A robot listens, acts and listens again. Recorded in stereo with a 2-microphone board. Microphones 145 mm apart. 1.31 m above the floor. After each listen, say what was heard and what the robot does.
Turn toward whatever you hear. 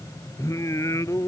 The singing: about 20° left or 160° left. Turn 20° left.
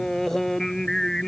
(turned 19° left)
Facing the singing.